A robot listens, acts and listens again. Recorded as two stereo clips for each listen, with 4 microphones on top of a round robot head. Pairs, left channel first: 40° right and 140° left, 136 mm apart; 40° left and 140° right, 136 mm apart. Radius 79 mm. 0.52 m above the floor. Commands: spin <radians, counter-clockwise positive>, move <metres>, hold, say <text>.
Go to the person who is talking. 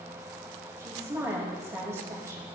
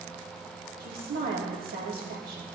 spin -2.62
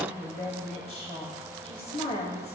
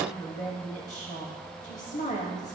move 1.0
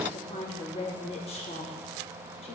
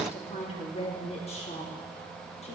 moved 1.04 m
move 1.0
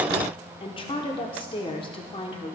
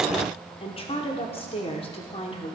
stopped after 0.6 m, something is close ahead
say Arrived at the woman speaking, straight ahead.